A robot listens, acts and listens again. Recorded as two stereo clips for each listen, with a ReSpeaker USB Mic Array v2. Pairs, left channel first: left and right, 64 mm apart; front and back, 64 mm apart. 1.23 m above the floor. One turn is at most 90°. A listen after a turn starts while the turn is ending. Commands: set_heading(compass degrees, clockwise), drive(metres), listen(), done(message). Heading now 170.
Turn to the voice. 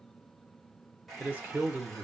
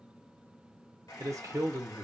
set_heading(260)
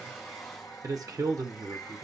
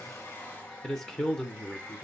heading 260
set_heading(340)
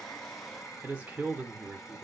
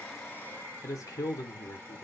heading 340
set_heading(5)
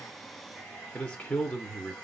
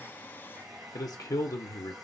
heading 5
set_heading(345)
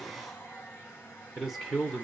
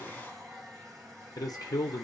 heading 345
done("Found it: a man speaking, straight ahead.")